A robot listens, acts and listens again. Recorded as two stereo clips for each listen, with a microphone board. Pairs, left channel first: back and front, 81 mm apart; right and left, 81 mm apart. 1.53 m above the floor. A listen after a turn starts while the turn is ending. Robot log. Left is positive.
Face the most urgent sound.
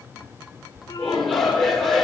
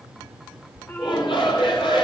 note: The shout: 95° right.
cmd yaw -95
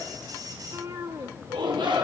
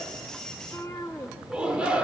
note: The shout is now 15° left.
cmd yaw +15
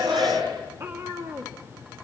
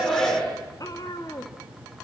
end: Facing the shout, over 4 m away.